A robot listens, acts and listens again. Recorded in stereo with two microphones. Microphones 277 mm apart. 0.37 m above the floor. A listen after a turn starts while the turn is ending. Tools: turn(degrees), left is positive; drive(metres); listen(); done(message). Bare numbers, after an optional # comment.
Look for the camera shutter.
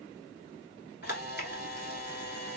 # The camera shutter: about 35° left or 145° left.
turn(35)
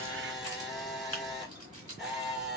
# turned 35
done("Found it: a camera shutter, straight ahead, 1 to 2 m away.")